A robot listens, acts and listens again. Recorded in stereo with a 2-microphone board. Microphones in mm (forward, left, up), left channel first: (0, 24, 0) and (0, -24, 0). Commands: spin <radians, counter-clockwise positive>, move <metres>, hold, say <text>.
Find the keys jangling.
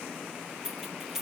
spin -0.52
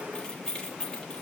spin 0.35
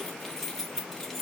spin 0.17
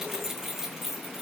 say Facing the keys jangling, 1 to 2 m away.